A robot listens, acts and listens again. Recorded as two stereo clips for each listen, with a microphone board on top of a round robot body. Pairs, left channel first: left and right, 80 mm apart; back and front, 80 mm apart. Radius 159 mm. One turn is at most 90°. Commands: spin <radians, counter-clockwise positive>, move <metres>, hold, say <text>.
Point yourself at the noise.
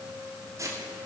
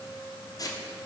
spin -1.57
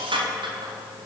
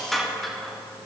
spin -1.57
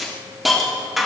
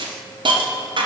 say Facing the hiss, 1 to 2 m away.